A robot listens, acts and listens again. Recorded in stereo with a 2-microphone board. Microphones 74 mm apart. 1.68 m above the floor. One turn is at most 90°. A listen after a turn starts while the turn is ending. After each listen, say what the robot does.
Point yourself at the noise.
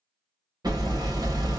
Turn 65° right.
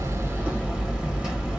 Turn 15° right.
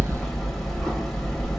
Found it: hammering, straight ahead.